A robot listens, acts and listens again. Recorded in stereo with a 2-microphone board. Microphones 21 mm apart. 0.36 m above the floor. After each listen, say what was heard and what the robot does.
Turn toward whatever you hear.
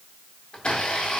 The blender: about 60° left or 120° left. Turn 60° left.
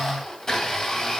So it is at 35° left. Turn 35° left.
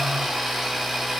The blender is now 10° right. Turn 10° right.
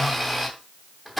Facing the blender.